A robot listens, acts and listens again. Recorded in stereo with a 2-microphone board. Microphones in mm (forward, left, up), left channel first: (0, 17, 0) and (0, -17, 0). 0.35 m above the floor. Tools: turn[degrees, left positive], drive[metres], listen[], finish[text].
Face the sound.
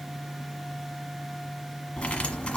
Thought: The cutlery clinking: about 40° left or 140° left.
Action: turn[40]
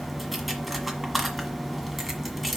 Action: finish[Facing the cutlery clinking.]